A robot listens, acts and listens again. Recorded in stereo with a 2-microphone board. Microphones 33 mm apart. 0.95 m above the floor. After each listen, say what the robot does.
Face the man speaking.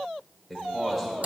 Turn 30° left.
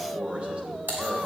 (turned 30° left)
Turn 40° right.
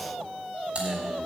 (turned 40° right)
Keep listening.
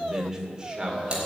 Turn 25° right.
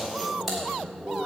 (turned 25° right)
Turn 10° right.
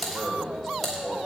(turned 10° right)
Facing the man speaking.